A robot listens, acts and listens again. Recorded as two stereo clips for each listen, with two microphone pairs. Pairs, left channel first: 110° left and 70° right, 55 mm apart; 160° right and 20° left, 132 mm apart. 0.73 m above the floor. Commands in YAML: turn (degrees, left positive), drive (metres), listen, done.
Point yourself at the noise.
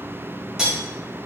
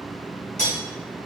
turn: -150
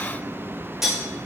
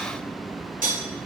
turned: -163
turn: 15
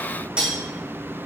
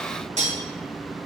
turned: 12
done: "Found it: cutlery clinking, straight ahead."